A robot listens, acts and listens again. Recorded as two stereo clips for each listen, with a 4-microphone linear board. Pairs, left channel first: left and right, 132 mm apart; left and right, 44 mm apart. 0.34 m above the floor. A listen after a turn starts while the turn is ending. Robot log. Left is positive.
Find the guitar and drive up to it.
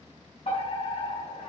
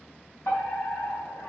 cmd idle
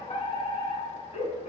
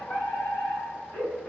cmd idle
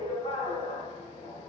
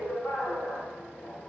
end: I can't make out a guitar to turn to.